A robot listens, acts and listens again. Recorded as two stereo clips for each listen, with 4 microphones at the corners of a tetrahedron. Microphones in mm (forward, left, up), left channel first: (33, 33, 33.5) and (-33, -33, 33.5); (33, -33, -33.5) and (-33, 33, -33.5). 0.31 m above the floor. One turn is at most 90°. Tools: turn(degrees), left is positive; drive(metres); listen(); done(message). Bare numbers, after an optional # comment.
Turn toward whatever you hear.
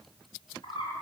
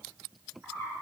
# The bird: 60° left.
turn(60)
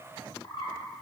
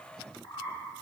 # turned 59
done("Facing the bird.")